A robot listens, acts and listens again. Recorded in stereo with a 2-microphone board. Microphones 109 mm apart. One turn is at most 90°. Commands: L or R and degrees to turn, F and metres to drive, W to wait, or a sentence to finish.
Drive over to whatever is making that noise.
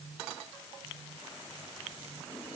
W
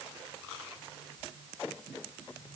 W
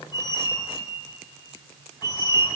L40
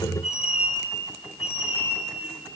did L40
L90
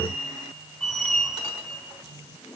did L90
F1.0
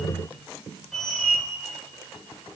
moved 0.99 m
F1.0
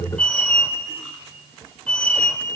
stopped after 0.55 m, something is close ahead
L10
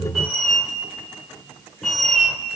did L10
I am next to the squeak.